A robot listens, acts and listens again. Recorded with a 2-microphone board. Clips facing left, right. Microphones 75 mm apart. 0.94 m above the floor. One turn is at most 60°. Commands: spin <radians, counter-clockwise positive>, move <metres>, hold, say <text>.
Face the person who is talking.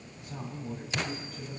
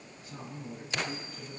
spin 1.05
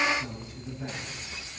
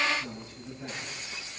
spin 0.35
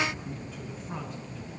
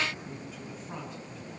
say Facing the man speaking.